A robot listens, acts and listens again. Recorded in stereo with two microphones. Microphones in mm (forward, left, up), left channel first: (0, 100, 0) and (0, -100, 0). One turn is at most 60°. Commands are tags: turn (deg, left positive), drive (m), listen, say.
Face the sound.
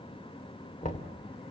<turn deg="35"/>
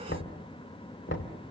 <turn deg="60"/>
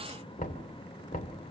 <turn deg="45"/>
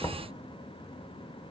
<turn deg="20"/>
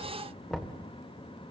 <say>Facing the knocking.</say>